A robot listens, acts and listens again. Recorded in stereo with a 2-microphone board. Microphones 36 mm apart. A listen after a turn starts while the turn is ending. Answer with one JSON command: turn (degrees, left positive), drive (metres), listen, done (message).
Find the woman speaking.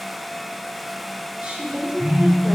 {"turn": -35}
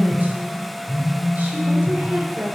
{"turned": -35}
{"turn": -100}
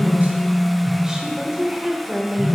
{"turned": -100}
{"turn": -20}
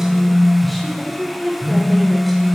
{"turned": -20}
{"done": "Found it: a woman speaking, straight ahead, 1 to 2 m away."}